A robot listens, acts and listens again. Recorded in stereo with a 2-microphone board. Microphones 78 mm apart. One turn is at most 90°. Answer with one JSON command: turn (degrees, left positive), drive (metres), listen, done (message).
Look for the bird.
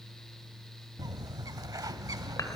{"turn": -50}
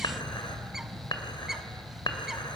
{"done": "Found it: a bird, straight ahead."}